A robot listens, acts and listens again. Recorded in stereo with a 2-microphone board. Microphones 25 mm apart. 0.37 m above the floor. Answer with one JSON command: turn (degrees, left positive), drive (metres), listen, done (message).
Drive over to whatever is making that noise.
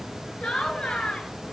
{"turn": 45}
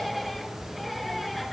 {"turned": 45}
{"drive": 1.0}
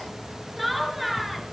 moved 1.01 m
{"drive": 1.0}
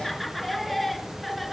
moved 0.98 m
{"drive": 1.0}
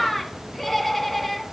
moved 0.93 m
{"drive": 1.0}
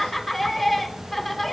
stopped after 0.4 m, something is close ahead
{"done": "Arrived at the laughter, straight ahead."}